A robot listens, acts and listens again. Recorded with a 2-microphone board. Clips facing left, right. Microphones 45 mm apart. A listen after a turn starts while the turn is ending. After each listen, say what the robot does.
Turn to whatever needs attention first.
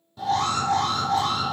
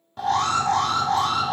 Turn 60° right.
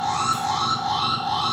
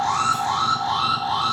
Turn 45° right.
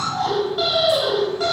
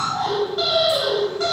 Facing the alarm, 1 to 2 m away.